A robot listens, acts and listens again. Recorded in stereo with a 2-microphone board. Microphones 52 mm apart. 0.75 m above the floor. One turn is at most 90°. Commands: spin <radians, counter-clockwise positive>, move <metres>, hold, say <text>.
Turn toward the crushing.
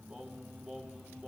hold
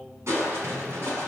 spin -1.05
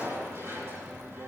spin -0.96
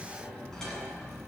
spin 0.26
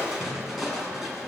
say Found it: crushing, straight ahead.